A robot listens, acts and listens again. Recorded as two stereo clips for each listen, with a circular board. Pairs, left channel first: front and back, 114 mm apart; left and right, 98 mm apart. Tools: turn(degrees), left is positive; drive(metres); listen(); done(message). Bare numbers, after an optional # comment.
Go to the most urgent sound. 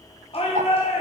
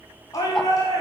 # The shout: 35° left.
turn(35)
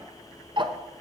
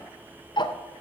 listen()
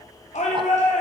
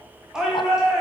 drive(1.0)
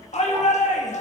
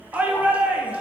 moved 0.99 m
# The shout is now 15° right.
turn(-15)
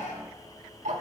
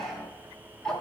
listen()
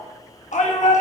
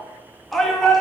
drive(1.0)
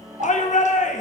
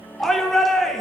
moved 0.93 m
drive(1.0)
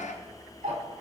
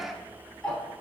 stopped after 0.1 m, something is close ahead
listen()
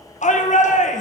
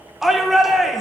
done("Arrived at the shout, straight ahead.")